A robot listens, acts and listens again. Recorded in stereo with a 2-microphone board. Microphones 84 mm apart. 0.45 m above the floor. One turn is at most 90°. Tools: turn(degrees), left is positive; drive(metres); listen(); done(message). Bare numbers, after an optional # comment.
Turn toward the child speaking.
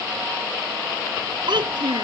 # The child speaking: about 75° right or 105° right.
turn(-75)
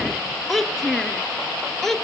done("Found it: a child speaking, straight ahead.")